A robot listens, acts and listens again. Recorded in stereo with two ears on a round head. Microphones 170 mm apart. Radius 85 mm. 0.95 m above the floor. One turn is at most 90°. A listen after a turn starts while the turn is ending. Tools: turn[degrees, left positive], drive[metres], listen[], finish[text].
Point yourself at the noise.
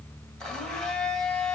Action: turn[30]
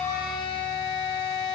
Thought: So it is at 145° left.
Action: turn[90]
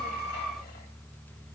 Thought: Nothing new. It was at 55° left.
Action: turn[55]
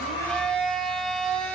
Action: finish[Found it: a blender, straight ahead.]